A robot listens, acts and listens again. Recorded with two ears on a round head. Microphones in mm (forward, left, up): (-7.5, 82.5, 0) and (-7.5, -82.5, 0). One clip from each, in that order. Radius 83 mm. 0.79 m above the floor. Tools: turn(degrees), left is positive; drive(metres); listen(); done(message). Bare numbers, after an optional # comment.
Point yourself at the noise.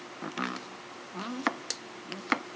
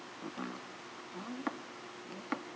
# The chopping: about 55° left or 125° left.
turn(55)
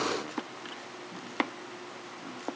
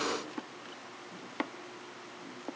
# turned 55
# So it is at 20° left.
turn(20)
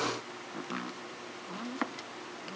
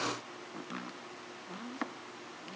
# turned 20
done("Facing the chopping, under 1 m away.")